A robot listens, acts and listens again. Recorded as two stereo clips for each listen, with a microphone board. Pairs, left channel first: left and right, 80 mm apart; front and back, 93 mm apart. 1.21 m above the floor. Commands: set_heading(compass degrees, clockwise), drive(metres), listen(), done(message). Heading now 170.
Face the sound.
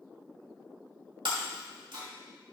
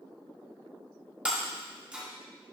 set_heading(270)
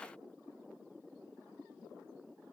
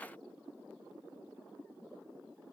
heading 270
done("Facing where the breaking glass came from. I can't hear it now.")